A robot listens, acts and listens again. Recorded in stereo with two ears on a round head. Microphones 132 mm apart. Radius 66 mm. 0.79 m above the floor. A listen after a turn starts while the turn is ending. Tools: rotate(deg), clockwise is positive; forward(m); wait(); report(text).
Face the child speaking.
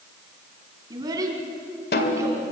rotate(20)
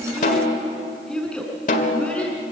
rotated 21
rotate(-10)
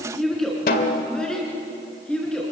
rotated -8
report("Found it: a child speaking, straight ahead.")